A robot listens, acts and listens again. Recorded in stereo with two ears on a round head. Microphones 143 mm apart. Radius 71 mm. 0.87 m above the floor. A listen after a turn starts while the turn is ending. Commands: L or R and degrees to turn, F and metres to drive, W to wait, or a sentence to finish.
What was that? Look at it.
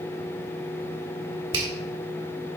R30
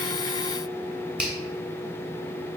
Facing the finger snap, 2 to 4 m away.